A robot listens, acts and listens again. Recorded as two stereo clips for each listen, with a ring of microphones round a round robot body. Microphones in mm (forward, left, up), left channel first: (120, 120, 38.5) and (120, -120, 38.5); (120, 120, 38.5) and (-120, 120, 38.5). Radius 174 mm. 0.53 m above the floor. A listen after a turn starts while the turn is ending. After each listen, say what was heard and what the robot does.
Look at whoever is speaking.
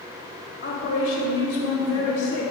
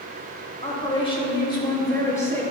The woman speaking: 80° left. Turn 80° left.
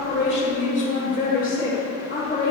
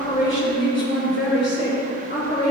The woman speaking is now 50° left. Turn 50° left.
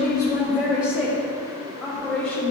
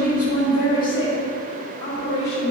Found it: a woman speaking, straight ahead, 2 to 4 m away.